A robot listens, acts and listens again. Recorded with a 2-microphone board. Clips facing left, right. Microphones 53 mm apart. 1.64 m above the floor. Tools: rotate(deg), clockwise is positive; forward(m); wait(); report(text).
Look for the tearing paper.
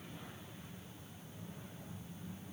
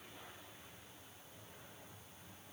wait()
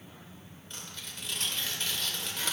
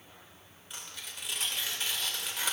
rotate(30)
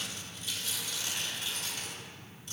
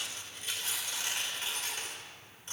rotate(135)
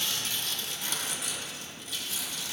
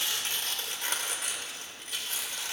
rotate(55)
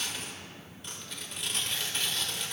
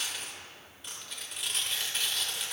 report("Found it: tearing paper, straight ahead.")